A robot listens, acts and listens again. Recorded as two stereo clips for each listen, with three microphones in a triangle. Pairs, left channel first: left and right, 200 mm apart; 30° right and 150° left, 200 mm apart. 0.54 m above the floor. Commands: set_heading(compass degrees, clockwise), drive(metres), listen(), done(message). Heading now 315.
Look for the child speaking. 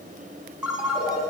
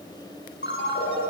listen()
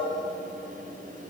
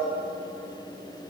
listen()
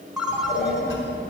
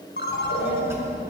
set_heading(240)
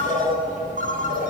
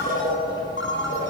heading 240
set_heading(200)
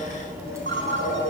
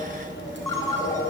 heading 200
set_heading(215)
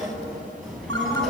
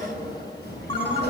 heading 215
done("Found it: a child speaking, straight ahead, over 4 m away.")